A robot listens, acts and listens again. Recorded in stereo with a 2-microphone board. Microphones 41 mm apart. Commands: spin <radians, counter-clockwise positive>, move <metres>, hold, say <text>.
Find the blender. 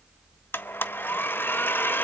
spin 1.05
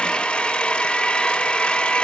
spin 0.52
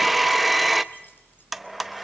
say Found it: a blender, straight ahead.